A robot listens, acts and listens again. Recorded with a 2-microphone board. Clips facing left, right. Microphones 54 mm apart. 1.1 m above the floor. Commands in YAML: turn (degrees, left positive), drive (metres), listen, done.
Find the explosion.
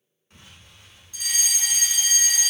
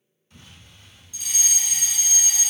turn: 45
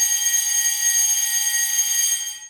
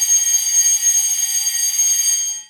listen: true
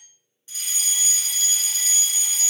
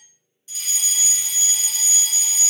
done: "I heard an explosion, but can't make it out now. It was about straight ahead or 90° left."